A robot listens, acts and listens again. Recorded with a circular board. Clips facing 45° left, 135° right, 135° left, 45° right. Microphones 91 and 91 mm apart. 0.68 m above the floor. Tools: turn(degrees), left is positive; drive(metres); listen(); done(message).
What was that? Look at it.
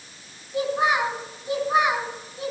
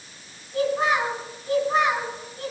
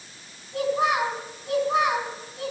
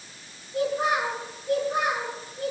turn(degrees=130)
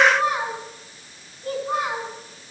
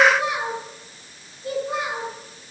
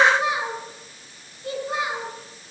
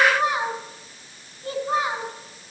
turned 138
done("Facing the child speaking.")